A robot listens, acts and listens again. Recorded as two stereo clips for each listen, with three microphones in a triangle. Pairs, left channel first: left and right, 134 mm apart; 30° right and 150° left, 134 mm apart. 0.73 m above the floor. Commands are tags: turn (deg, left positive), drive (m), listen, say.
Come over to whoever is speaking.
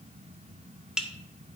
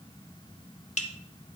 <listen/>
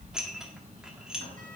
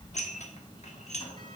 <listen/>
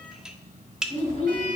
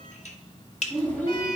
<turn deg="45"/>
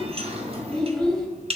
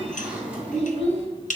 <drive m="1.0"/>
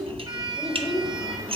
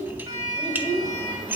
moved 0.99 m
<drive m="1.0"/>
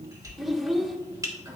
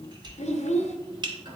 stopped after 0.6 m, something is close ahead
<say>Arrived at the child speaking, straight ahead.</say>